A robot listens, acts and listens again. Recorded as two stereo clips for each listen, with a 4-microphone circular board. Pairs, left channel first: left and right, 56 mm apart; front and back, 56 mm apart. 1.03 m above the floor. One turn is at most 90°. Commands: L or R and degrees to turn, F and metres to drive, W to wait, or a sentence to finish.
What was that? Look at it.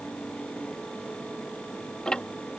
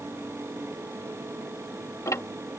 L15
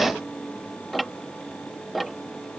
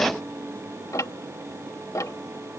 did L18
Facing the ticking.